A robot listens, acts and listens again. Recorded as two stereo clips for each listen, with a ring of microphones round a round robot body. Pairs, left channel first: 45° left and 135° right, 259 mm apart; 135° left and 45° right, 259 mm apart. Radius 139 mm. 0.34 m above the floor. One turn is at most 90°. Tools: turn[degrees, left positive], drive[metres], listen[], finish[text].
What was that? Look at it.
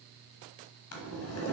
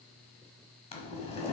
Thought: The boiling: 70° left.
Action: turn[70]
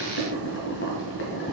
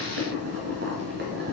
Action: finish[Facing the boiling, 1 to 2 m away.]